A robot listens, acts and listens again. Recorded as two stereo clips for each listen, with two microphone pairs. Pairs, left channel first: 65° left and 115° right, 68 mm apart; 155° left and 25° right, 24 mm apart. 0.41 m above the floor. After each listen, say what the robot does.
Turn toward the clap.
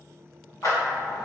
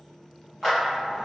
Turn 60° left.
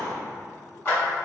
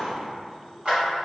Turn 15° left.
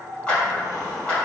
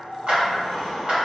Facing the clap.